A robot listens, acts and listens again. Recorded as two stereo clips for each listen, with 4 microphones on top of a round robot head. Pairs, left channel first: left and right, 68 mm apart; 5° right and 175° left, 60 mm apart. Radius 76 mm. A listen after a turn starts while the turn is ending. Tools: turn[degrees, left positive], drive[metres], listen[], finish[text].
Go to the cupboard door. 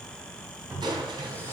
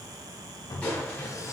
Thought: The cupboard door: 25° right.
Action: turn[-25]
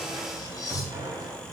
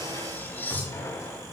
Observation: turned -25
Thought: The cupboard door is now 10° left.
Action: turn[10]
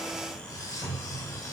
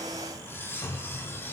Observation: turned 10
Action: drive[1.0]
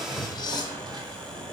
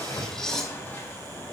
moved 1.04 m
Action: listen[]
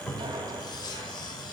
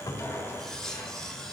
Action: drive[1.0]
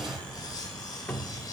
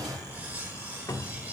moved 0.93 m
Thought: The cupboard door is now 20° left.
Action: turn[20]
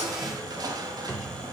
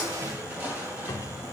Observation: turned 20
Action: drive[1.0]
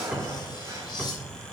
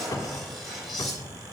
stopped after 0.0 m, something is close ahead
Thought: The cupboard door is now 10° right.
Action: turn[-10]
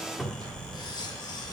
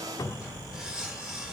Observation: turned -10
Action: finish[Arrived at the cupboard door, straight ahead.]